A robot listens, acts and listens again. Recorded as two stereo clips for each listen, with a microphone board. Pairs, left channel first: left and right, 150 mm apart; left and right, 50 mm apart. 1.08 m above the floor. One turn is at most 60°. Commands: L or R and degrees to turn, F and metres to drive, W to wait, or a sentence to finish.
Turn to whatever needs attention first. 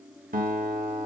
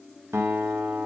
W
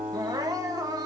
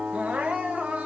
R25
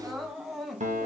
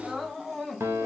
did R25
Facing the crying, under 1 m away.